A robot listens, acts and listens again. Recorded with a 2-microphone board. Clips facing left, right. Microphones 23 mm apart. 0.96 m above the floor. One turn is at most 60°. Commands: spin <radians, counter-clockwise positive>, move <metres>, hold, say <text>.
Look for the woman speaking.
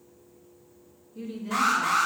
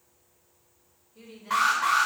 spin -0.26
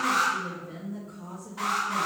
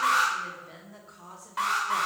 spin -1.05
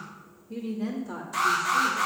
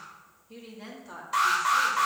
spin -0.44
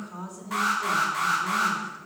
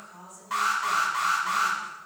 spin 0.44
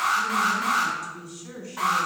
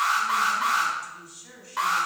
say Facing the woman speaking, 1 to 2 m away.